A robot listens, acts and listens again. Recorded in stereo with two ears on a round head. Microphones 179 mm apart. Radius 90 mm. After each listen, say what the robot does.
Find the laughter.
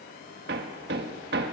Keep listening.
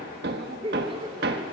Turn 25° right.
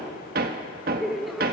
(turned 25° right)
Facing the laughter.